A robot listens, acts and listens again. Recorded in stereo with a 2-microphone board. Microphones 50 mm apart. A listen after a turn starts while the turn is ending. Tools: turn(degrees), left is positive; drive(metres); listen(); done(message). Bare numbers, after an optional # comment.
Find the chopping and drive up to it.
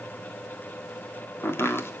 # The chopping: about 50° left or 130° left.
turn(50)
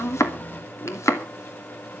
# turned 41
# So it is at 85° left.
turn(85)
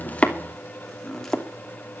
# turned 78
# The chopping is now 10° left.
turn(10)
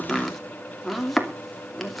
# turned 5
drive(1.0)
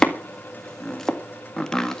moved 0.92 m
# The chopping is now 10° left.
turn(10)
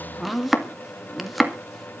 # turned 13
drive(1.0)
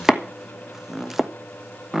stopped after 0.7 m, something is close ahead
# The chopping is now 10° right.
turn(-10)
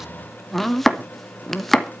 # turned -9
done("Arrived at the chopping, straight ahead.")